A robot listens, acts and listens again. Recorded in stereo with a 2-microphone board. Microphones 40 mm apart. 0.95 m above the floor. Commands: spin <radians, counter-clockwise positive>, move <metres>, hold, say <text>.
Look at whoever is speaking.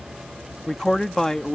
spin 0.52
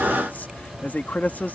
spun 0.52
spin 2.36
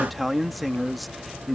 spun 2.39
say Facing the man speaking.